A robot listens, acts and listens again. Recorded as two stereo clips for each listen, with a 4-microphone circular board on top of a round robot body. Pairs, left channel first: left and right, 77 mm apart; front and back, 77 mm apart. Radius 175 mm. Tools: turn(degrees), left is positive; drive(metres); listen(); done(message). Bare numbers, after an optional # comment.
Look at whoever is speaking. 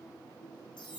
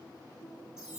listen()
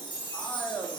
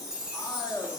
# The man speaking: 25° left.
turn(25)
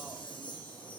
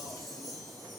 listen()
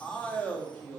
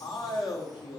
# The man speaking is now 15° left.
turn(15)
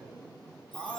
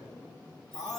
done("Found it: a man speaking, straight ahead, 1 to 2 m away.")